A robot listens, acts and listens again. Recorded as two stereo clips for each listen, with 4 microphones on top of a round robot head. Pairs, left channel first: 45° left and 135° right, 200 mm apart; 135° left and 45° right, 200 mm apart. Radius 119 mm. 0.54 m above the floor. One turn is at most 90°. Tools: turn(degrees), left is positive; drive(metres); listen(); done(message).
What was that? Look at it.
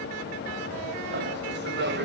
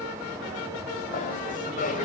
turn(degrees=-90)
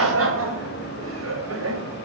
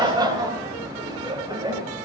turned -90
turn(degrees=-90)
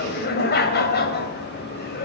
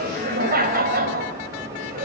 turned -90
done("Facing the laughter.")